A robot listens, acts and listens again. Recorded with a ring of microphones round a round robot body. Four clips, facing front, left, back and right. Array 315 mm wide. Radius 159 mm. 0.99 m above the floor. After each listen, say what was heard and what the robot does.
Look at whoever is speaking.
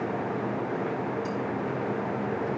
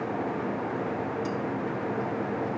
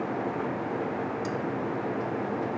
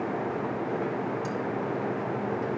Keep listening.
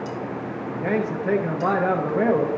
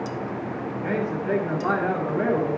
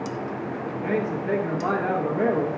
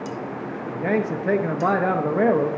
The man speaking: 65° right. Turn 65° right.
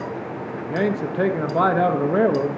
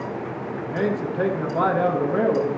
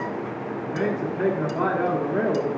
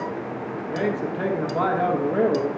Facing the man speaking.